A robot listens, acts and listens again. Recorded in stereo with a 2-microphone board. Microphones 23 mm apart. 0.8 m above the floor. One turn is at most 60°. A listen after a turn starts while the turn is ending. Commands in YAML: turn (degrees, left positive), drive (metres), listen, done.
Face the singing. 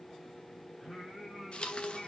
turn: 15
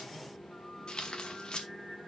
turn: 25
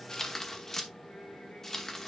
listen: true
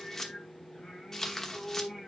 turn: 60
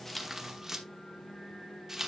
turn: 60
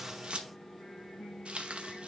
turn: 45
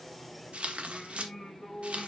turn: 15
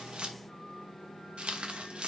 done: "Found it: singing, straight ahead, over 4 m away."